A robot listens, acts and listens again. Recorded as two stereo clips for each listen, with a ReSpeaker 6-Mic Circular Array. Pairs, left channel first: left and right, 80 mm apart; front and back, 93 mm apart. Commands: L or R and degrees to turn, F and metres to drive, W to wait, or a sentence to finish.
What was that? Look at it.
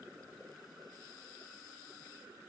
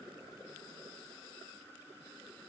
W
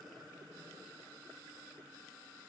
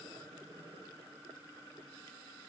W
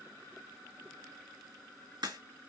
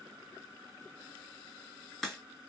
R85
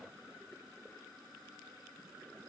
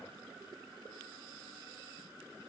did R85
Facing where the crack came from. I can't hear it now.